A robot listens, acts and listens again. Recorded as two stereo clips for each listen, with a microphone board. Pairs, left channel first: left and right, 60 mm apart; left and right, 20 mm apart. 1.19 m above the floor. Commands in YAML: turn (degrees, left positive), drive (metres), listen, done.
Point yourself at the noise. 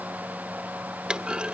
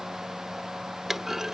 turn: -15
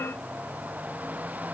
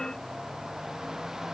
listen: true
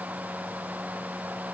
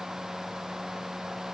done: "I heard a clunk, but can't make it out now. It was about straight ahead or 150° right."